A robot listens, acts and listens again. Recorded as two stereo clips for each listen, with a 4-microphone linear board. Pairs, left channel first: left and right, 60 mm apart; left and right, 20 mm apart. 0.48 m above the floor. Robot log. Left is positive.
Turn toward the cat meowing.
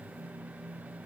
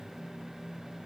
cmd idle
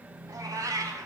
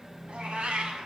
cmd yaw -90
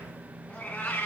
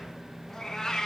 note: So it is at 30° left.
cmd yaw +30
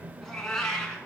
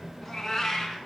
note: The cat meowing is now 10° left.
cmd yaw +10
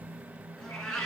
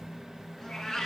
note: The cat meowing is now 10° left.
cmd yaw +10
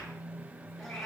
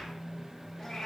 end: Facing the cat meowing, 2 to 4 m away.